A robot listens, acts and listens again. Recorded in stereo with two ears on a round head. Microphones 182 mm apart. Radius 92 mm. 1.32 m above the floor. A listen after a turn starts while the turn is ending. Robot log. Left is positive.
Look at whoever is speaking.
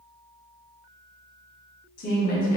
note: The woman speaking: about 40° left or 140° left.
cmd yaw +40
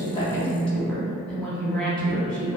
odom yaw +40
end: Found it: a woman speaking, straight ahead.